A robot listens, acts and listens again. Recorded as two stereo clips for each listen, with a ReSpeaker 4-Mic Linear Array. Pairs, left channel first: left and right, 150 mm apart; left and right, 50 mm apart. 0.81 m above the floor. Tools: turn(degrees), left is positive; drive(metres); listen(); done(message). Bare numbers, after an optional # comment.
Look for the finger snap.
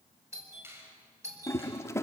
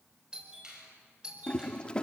# The finger snap: about 15° right or 165° right.
turn(-15)
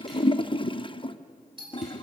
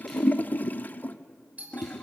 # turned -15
listen()
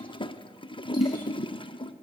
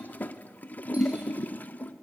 listen()
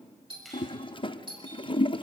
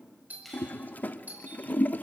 done("I heard a finger snap, but can't make it out now. It was about straight ahead or 150° right.")